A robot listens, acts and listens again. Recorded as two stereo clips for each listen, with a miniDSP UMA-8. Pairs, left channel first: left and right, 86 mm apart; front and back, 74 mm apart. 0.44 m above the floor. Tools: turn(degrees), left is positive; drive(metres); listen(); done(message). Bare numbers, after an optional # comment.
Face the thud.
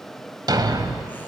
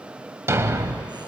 # The thud: 125° right.
turn(-125)
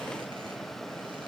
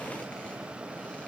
done("Facing where the thud came from. I can't hear it now.")